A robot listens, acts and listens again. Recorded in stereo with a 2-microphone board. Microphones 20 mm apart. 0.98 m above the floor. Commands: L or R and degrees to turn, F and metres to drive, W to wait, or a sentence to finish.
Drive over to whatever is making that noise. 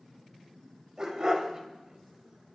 R30
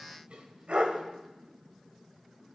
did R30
R120
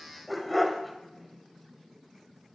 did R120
F1.0
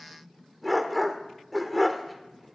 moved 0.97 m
F1.0
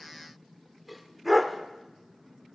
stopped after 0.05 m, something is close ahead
I am next to the dog barking.